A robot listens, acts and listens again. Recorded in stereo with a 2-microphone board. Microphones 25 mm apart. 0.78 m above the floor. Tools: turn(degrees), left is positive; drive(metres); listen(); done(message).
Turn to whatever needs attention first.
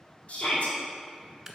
turn(degrees=50)
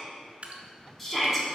done("Found it: a shout, straight ahead.")